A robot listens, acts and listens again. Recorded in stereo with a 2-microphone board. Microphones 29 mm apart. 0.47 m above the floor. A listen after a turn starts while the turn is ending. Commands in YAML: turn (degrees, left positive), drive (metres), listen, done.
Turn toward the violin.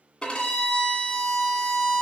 turn: 30
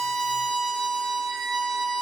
done: "Facing the violin, 1 to 2 m away."